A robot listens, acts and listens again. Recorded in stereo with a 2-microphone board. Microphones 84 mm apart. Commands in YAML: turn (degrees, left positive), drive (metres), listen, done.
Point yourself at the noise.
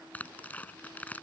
turn: 20
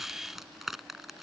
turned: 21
done: "Facing the tearing paper."